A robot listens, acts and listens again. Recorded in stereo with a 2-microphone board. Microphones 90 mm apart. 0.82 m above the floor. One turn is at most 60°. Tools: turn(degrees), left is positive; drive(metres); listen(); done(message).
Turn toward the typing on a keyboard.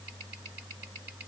listen()
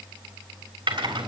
turn(degrees=-60)
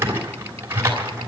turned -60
turn(degrees=-30)
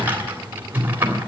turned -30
turn(degrees=-25)
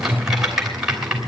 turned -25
done("Facing the typing on a keyboard, 2 to 4 m away.")